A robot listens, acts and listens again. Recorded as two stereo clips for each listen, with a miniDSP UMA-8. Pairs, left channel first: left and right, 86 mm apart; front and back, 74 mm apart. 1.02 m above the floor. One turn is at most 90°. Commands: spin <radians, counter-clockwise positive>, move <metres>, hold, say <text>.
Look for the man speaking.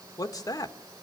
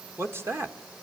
spin 1.57
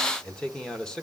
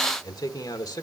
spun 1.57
spin 0.17
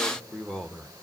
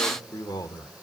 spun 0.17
say Found it: a man speaking, straight ahead.